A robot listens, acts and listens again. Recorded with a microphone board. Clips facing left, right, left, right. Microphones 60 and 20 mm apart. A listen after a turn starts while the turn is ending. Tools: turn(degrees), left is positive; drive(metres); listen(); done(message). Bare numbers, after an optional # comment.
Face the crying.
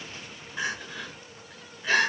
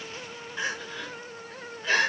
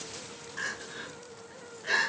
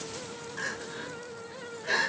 # The crying: about 20° left or 160° left.
turn(20)
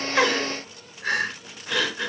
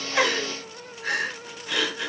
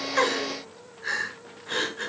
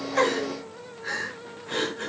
# So it is at 140° left.
turn(140)
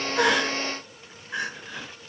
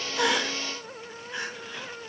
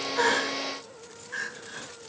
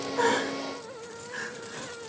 # The crying is now 25° left.
turn(25)
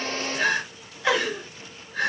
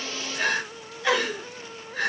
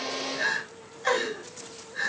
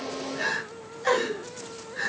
done("Found it: crying, straight ahead.")